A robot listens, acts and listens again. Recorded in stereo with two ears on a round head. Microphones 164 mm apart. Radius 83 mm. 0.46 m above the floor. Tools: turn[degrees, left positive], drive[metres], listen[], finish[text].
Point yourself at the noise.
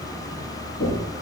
Thought: The knocking: about 45° left or 135° left.
Action: turn[45]
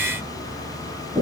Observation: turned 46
Action: finish[Facing the knocking, 2 to 4 m away.]